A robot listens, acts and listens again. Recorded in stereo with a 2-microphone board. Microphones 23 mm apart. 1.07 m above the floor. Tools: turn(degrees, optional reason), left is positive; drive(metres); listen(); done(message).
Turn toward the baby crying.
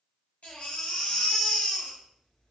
turn(degrees=90)
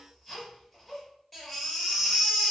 done("Facing the baby crying.")